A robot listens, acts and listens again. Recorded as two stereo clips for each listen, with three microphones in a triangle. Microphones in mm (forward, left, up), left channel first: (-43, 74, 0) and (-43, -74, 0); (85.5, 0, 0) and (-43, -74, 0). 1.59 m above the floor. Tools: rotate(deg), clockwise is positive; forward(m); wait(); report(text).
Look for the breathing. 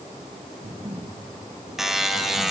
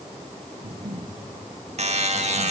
rotate(140)
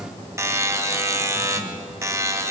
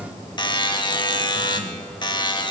wait()
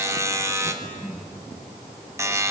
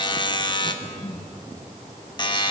rotate(-15)
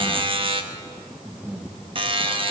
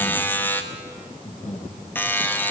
report("Found it: breathing, straight ahead.")